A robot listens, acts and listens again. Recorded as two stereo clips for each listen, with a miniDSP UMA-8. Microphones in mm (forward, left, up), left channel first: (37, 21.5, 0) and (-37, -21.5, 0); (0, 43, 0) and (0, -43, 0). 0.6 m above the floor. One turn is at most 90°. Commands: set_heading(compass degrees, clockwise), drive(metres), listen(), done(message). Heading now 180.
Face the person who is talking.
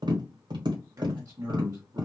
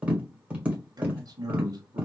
set_heading(270)
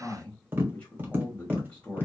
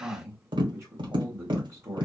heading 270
set_heading(310)
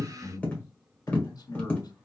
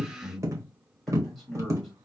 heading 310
done("Found it: a man speaking, straight ahead, 1 to 2 m away.")